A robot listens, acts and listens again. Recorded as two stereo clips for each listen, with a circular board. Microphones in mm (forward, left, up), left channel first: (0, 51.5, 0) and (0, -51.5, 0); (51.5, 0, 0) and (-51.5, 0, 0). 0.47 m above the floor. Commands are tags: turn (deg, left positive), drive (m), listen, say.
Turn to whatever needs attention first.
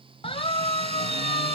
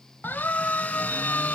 <turn deg="70"/>
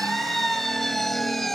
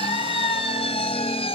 <say>Found it: a siren, straight ahead.</say>